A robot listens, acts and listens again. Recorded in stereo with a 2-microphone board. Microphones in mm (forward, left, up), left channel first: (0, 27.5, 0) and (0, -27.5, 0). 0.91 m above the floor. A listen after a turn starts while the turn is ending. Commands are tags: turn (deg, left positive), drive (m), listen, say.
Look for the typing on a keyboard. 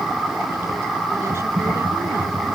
<turn deg="25"/>
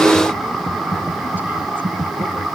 <say>Facing the typing on a keyboard.</say>